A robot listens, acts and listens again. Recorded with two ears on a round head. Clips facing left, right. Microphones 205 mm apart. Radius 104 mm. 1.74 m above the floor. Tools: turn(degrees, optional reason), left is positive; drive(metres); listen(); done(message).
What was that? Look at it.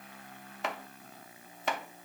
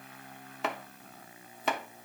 turn(degrees=-90)
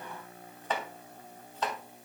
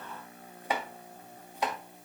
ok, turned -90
turn(degrees=-10, reason="So it is at 10° right.")
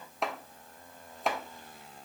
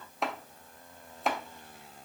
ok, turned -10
done("Found it: chopping, straight ahead.")